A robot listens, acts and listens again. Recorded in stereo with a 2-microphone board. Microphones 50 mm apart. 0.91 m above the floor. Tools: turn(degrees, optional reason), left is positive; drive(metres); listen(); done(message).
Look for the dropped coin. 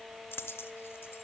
turn(degrees=55, reason="The dropped coin: about 55° left or 125° left.")
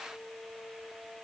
listen()
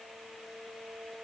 done("I heard a dropped coin, but can't make it out now. It was about straight ahead or 70° left.")